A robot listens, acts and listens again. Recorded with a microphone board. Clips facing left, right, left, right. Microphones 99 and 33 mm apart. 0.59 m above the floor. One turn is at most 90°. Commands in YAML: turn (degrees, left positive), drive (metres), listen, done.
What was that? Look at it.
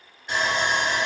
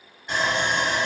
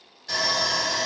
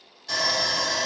turn: 30
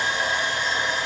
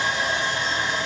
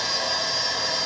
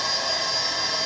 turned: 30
turn: -25
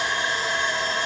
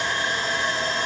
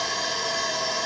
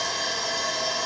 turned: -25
turn: 15
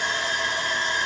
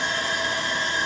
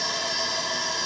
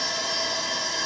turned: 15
done: "Found it: sawing, straight ahead, 1 to 2 m away."